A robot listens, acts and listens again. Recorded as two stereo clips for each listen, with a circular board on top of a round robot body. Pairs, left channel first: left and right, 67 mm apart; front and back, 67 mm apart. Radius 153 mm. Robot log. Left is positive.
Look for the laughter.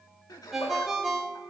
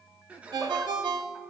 note: The laughter: 110° left.
cmd yaw +110
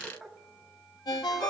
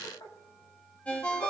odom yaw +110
end: Facing the laughter.